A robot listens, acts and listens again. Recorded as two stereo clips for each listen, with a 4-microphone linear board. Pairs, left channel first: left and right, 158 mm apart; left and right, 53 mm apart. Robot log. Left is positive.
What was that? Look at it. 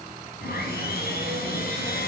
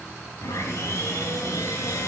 cmd yaw +90
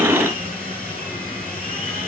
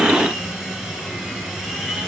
note: So it is at 10° left.
cmd yaw +10
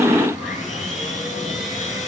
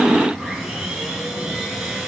end: Facing the sawing, over 4 m away.